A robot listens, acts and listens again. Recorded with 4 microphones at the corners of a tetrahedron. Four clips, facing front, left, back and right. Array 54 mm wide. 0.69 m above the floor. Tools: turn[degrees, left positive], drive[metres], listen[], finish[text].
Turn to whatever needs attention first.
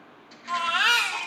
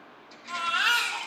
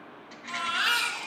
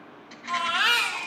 Thought: The baby crying: 50° right.
Action: turn[-50]
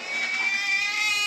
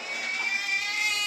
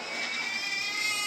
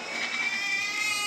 Action: finish[Found it: a baby crying, straight ahead.]